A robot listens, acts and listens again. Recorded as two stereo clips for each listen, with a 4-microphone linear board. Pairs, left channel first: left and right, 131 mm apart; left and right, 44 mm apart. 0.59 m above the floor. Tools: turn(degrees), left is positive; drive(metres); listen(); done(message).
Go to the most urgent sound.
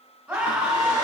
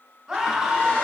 turn(degrees=-30)
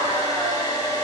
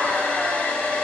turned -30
listen()
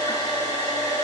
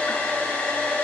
listen()
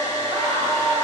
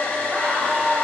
turn(degrees=-145)
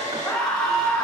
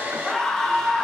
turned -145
drive(metres=1.0)
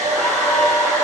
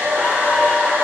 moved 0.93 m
listen()
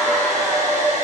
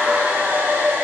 listen()
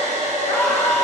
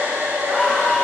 drive(metres=1.0)
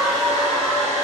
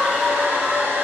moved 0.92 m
drive(metres=1.0)
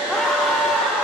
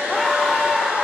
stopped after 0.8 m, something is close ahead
done("Arrived at the scream, straight ahead.")